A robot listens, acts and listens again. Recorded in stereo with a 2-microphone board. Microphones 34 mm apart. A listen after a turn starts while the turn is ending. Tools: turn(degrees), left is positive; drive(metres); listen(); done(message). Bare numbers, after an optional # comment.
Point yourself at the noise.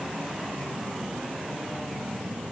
listen()
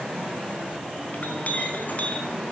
# The clink: about 50° left or 130° left.
turn(50)
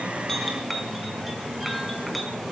done("Facing the clink.")